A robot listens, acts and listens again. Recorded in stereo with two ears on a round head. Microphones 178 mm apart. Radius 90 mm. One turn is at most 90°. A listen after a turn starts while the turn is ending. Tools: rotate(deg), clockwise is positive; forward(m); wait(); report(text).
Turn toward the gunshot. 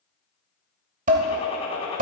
rotate(-30)
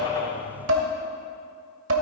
wait()
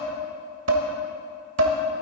report("I heard a gunshot, but can't make it out now. It was about straight ahead or 120° left.")